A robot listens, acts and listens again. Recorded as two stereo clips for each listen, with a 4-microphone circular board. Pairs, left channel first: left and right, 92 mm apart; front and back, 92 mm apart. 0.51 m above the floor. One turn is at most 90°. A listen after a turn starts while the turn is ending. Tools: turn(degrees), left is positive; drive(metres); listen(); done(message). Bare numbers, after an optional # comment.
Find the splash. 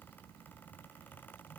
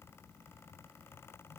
listen()
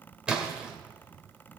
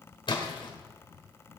# The splash: 15° right.
turn(-15)
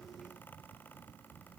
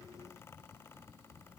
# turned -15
done("Facing where the splash came from. I can't hear it now.")